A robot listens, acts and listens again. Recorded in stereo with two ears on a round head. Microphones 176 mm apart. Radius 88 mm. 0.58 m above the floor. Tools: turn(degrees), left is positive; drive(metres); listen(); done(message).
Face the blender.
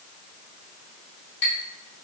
listen()
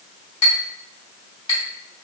listen()
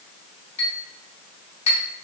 done("I can't make out a blender, only a clink.")